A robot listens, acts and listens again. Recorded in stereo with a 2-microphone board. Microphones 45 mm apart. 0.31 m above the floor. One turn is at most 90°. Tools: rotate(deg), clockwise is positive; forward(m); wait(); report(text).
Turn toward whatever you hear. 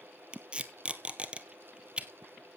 rotate(25)
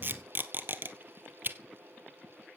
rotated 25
rotate(90)
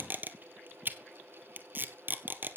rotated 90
rotate(50)
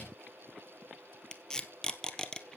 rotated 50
rotate(-15)
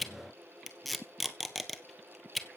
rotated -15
report("Facing the tape being pulled.")